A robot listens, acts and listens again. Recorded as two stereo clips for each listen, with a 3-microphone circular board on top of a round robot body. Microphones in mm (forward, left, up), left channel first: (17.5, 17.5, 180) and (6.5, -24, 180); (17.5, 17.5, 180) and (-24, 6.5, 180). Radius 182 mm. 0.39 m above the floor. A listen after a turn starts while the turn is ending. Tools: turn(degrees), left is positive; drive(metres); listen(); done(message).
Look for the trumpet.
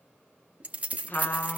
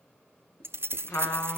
turn(degrees=25)
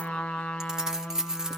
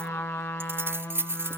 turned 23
done("Facing the trumpet.")